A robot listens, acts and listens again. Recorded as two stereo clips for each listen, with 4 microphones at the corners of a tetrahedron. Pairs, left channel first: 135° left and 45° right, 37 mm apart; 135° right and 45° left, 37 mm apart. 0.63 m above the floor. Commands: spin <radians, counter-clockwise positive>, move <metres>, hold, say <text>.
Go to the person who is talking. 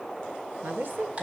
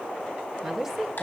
spin -0.61
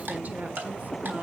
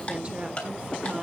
hold
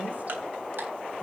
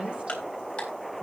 hold
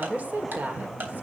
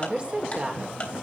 move 1.0
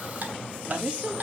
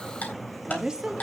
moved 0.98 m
spin -0.17
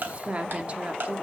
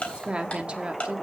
move 1.0
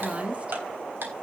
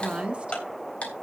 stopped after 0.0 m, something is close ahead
say Arrived at the woman speaking, straight ahead.